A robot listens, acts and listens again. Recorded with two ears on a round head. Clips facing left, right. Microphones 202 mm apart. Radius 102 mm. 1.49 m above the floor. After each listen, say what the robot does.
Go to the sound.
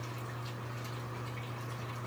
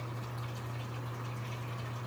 Keep listening.
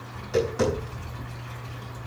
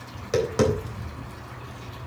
Turn 75° right.
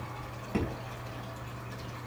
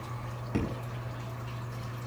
Drive 1.0 m forward.
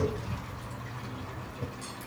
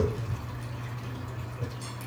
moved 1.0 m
Turn 10° right.
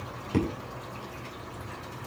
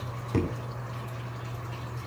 Drive 1.0 m forward.
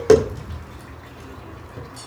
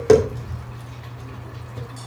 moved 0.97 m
Drive 1.0 m forward.
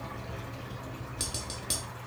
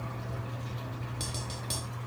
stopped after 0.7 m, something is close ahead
Turn 15° left.
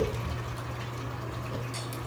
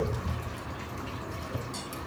I am next to the tapping.